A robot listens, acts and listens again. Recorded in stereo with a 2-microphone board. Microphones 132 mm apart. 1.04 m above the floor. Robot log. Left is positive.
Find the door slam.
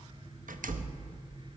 cmd yaw -90
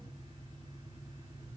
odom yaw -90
end: Facing where the door slam came from. I can't hear it now.